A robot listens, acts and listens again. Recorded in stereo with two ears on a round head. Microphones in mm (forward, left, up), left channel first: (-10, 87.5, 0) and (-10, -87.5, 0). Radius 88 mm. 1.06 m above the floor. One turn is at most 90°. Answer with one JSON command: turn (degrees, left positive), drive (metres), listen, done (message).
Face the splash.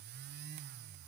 {"listen": true}
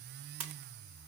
{"turn": -90}
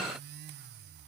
{"done": "Facing where the splash came from. I can't hear it now."}